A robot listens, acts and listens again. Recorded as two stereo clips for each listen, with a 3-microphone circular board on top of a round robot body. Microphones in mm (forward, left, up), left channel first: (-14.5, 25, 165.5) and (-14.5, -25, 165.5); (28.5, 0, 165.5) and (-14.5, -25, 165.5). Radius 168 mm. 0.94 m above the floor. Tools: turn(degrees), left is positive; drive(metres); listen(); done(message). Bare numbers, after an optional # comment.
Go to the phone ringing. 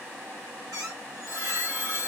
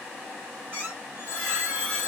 # The phone ringing: 50° right.
turn(-50)
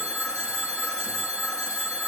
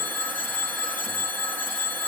# The phone ringing is now 20° right.
turn(-20)
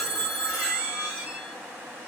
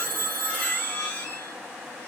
drive(1.0)
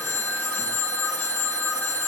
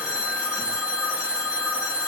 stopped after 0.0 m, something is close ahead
# The phone ringing is now 10° left.
turn(10)
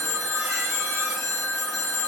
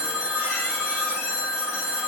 done("Blocked. The phone ringing is further on, straight ahead.")